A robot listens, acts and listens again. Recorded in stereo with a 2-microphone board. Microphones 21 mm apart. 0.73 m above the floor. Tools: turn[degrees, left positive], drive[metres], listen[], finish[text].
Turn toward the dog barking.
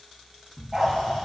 Thought: The dog barking: about 20° right or 160° right.
Action: turn[-20]
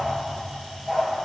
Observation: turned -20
Action: finish[Found it: a dog barking, straight ahead, over 4 m away.]